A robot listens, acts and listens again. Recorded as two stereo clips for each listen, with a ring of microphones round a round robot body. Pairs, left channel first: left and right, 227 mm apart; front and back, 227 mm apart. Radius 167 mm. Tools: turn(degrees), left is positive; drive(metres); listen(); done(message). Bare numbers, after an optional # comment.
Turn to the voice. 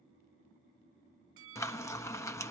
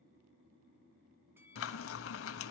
listen()
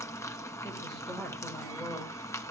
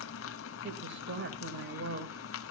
# The woman speaking: 175° left.
turn(175)
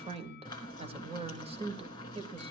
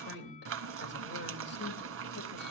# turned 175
# The woman speaking is now 30° right.
turn(-30)
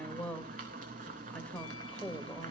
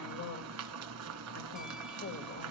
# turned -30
done("Facing the woman speaking.")